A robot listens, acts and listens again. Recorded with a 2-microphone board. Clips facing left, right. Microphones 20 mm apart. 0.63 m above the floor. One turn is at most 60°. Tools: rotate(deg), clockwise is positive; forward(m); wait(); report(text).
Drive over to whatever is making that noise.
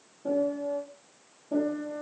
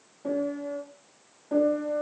rotate(60)
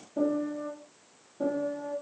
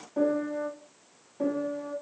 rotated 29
rotate(55)
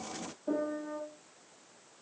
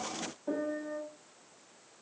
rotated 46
forward(1.0)
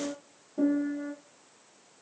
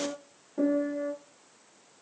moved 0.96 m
rotate(20)
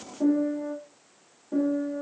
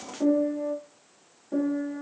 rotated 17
forward(1.0)
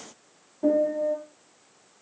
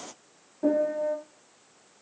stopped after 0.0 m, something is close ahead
report("Arrived at the piano, straight ahead.")